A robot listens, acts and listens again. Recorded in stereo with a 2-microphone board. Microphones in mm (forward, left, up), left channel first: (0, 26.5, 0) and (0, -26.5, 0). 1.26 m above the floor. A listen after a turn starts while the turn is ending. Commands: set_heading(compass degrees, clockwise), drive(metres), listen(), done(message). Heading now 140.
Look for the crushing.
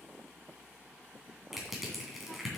set_heading(170)
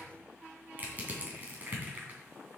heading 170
set_heading(315)
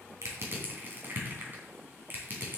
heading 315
set_heading(355)
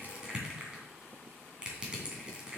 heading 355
set_heading(10)
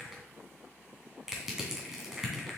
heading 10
set_heading(20)
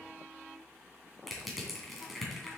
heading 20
done("Found it: crushing, straight ahead.")